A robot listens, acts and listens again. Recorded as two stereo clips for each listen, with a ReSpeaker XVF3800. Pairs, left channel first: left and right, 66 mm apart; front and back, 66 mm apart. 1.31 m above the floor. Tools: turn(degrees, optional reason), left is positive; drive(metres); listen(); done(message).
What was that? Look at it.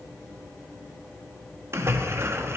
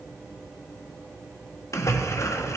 turn(degrees=-40, reason="The splash: 40° right.")
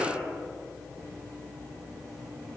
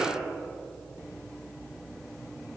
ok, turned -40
done("I heard a splash from this way, but can't make it out now.")